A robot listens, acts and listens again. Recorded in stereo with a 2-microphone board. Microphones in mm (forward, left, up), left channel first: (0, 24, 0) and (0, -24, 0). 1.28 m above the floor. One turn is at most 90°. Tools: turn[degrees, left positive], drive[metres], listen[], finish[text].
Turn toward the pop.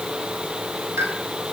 Action: turn[-90]
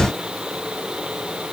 Action: finish[I heard a pop from this way, but can't make it out now.]